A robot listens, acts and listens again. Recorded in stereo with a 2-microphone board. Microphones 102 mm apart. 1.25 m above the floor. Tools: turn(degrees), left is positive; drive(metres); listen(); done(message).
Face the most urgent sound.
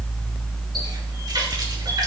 listen()
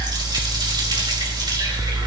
listen()
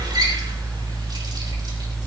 done("I can't make out anything urgent to turn to.")